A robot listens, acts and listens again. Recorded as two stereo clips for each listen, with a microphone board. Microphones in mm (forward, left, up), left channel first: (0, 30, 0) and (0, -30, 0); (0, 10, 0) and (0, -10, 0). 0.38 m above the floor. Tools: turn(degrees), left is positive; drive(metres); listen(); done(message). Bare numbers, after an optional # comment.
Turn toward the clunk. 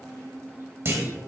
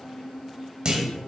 # The clunk: about 45° right or 135° right.
turn(-45)
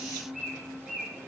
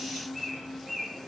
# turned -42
listen()
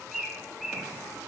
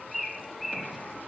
done("I heard a clunk, but can't make it out now. It was about straight ahead or 95° right.")